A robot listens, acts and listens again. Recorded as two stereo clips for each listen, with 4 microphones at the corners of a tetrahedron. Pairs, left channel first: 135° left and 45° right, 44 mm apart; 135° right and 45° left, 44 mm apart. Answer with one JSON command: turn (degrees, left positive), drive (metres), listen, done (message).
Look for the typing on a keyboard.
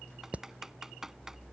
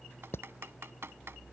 {"turn": 35}
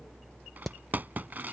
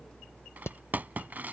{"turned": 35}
{"done": "Facing the typing on a keyboard."}